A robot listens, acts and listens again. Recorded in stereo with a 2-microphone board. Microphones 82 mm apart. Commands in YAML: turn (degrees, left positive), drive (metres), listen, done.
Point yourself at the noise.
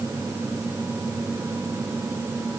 listen: true
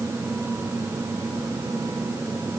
listen: true
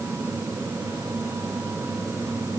done: "I can't make out anything to turn to."